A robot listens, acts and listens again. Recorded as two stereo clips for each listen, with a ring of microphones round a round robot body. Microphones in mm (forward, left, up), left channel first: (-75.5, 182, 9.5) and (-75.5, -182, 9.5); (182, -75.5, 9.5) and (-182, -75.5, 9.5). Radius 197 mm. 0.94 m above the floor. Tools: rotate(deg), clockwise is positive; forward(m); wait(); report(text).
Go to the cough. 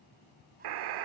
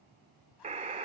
wait()
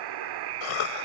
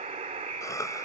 rotate(-85)
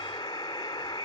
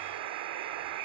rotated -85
wait()
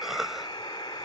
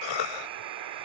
forward(1.0)
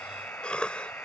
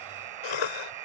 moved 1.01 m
forward(1.0)
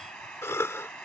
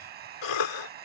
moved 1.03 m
forward(1.0)
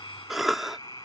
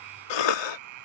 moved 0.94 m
forward(1.0)
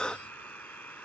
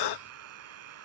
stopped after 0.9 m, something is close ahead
report("Arrived at the cough, straight ahead.")